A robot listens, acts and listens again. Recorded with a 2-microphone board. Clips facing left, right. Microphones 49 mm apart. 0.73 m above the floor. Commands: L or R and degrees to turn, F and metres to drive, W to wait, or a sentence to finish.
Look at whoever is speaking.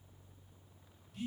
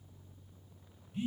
W
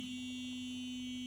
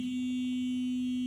W
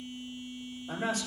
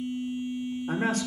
R70
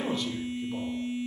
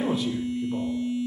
R10
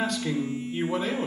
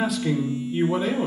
Facing the man speaking, 2 to 4 m away.